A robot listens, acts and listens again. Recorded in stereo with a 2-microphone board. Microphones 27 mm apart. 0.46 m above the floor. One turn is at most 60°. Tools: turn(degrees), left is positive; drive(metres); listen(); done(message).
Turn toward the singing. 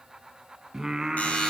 turn(degrees=-25)
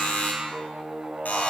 turn(degrees=-60)
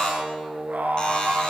turn(degrees=-60)
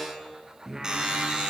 turn(degrees=-20)
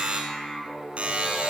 done("Found it: singing, straight ahead, over 4 m away.")